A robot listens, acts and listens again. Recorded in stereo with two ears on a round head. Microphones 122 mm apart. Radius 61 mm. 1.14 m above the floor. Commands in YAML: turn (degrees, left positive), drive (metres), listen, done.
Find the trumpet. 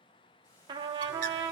turn: -30
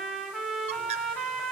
done: "Found it: a trumpet, straight ahead, 1 to 2 m away."